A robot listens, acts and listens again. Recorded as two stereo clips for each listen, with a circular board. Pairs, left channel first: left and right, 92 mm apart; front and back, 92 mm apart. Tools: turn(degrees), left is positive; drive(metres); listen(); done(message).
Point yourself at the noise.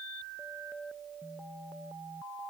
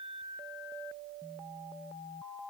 listen()
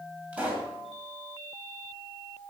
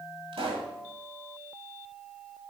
turn(degrees=-165)
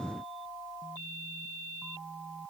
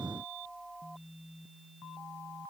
done("Facing where the pop came from. I can't hear it now.")